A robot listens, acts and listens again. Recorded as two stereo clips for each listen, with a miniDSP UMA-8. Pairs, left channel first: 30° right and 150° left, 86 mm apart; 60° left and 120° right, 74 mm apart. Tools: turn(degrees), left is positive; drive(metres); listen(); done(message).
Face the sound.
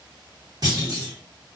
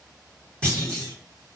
turn(degrees=135)
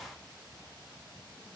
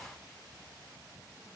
done("Facing where the clunk came from. I can't hear it now.")